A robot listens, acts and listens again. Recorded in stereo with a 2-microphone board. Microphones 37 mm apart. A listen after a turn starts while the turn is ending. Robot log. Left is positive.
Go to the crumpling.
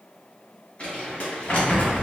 note: The crumpling: about 35° left or 145° left.
cmd yaw +35
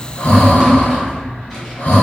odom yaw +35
cmd idle
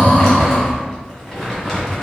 cmd fwd 1.0
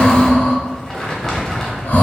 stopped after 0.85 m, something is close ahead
note: The crumpling is now 15° left.
cmd yaw +15
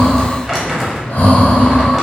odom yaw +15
end: I am next to the crumpling.